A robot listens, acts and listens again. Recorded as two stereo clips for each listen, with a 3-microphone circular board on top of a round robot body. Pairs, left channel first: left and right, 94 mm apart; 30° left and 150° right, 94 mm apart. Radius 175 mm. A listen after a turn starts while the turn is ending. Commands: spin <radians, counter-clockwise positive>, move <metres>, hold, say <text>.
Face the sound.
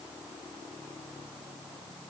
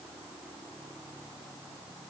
hold
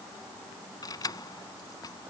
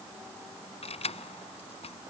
spin 0.70
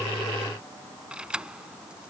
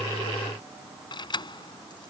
spin -0.17
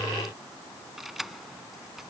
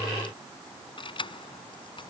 say Found it: keys jangling, straight ahead.